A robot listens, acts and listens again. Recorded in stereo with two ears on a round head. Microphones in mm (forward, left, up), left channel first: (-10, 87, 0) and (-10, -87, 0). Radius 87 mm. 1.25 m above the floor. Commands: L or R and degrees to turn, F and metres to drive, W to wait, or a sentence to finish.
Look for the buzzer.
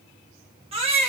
W
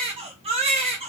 W
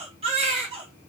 I can't make out a buzzer, only a baby crying.